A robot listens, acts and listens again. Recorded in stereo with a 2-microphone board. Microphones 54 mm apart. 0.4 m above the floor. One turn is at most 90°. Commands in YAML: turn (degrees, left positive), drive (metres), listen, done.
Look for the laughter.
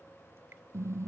listen: true
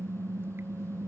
listen: true
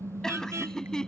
turn: 30
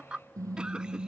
turn: -15
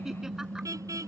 listen: true
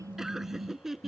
done: "Facing the laughter."